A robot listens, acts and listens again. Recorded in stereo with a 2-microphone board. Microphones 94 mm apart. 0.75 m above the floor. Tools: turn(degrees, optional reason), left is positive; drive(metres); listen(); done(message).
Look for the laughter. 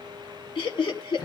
turn(degrees=60, reason="The laughter: about 60° left or 120° left.")
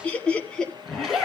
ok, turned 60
done("Facing the laughter.")